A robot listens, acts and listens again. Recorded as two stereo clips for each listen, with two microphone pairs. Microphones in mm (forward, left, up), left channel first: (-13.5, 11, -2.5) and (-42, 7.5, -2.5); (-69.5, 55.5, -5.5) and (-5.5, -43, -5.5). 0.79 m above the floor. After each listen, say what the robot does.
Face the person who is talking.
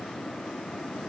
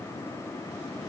Keep listening.
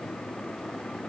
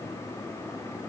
Keep listening.
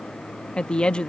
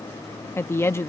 Turn 60° left.
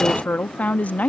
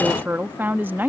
Turn 15° left.
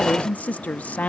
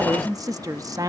Found it: a woman speaking, straight ahead.